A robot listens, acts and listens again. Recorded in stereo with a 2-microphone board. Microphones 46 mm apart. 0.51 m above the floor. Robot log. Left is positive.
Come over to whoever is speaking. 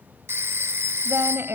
note: The woman speaking: about 60° right or 120° right.
cmd yaw -60
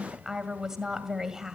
note: So it is at 10° right.
cmd yaw -10
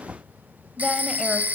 cmd idle
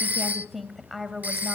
cmd fwd 1.0
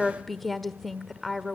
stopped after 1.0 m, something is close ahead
end: Arrived at the woman speaking, straight ahead.